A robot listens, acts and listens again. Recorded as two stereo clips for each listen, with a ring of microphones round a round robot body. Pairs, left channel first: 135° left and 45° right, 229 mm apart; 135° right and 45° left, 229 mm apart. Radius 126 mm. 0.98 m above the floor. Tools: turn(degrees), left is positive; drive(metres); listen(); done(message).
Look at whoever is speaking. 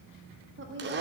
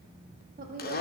turn(degrees=-10)
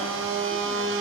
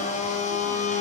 listen()
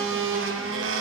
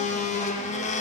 listen()
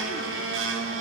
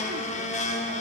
done("I heard a woman speaking from this way, but can't make it out now.")